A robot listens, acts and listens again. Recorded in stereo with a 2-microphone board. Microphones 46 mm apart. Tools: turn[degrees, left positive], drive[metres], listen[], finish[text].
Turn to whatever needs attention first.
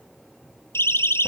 Thought: The siren: about 65° left or 115° left.
Action: turn[65]
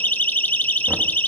Thought: So it is at 45° left.
Action: turn[45]
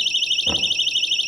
Action: finish[Found it: a siren, straight ahead, 2 to 4 m away.]